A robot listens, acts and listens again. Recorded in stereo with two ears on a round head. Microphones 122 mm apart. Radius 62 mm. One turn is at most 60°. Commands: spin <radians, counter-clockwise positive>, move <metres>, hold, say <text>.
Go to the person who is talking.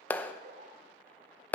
hold
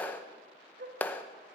hold
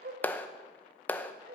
say I can't make out anyone speaking, only a dog barking and a clap.